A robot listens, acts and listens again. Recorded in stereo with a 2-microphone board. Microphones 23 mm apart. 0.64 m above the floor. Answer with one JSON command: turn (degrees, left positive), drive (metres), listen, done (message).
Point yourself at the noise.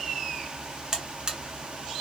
{"turn": -30}
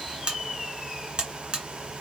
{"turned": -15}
{"turn": -135}
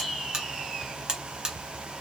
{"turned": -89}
{"turn": -40}
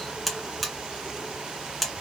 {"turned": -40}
{"done": "Facing the buzzer, under 1 m away."}